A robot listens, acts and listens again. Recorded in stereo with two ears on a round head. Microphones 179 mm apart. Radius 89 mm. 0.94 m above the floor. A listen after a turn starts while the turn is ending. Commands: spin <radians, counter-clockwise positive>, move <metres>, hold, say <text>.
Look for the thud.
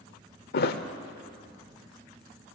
spin 0.96
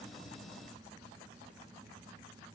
hold
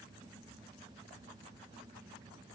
say I heard a thud, but can't make it out now. It was about straight ahead or 70° left.